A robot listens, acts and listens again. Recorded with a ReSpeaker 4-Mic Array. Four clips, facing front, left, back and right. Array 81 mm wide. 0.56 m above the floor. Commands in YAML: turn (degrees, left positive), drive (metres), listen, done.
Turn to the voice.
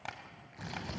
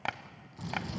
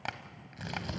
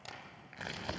turn: 50
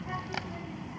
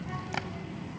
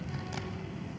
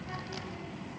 done: "Facing the child speaking, 2 to 4 m away."